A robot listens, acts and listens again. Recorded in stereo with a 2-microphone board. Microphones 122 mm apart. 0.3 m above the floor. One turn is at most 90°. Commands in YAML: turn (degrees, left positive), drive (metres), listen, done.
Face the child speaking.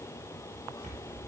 listen: true
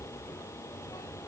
listen: true
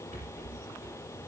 done: "I can't make out a child speaking, only a rattle."